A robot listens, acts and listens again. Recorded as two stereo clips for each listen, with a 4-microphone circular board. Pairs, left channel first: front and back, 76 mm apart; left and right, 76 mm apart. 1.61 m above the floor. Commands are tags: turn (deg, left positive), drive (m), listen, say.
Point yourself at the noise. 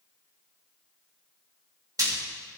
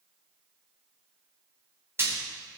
<turn deg="-145"/>
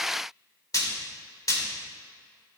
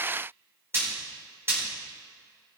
<turn deg="-35"/>
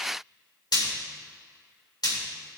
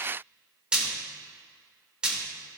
<turn deg="-10"/>
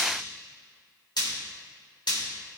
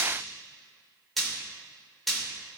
<say>Found it: frying, straight ahead, 2 to 4 m away.</say>